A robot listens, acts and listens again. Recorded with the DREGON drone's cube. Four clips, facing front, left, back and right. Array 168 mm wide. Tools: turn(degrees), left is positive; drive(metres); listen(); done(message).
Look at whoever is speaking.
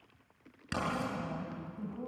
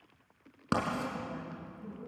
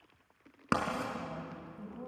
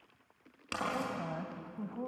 turn(degrees=-95)
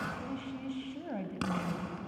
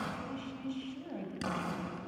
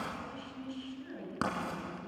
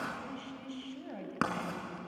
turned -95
done("Facing the woman speaking.")